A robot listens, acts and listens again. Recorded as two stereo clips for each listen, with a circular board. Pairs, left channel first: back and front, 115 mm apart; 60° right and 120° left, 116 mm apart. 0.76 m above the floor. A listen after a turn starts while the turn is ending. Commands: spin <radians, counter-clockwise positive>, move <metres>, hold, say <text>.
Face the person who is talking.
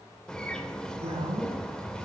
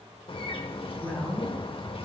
spin 0.26
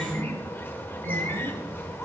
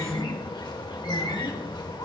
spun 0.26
hold
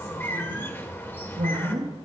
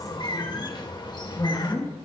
spin -0.17
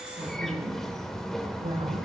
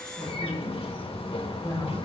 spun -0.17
say Facing the woman speaking, over 4 m away.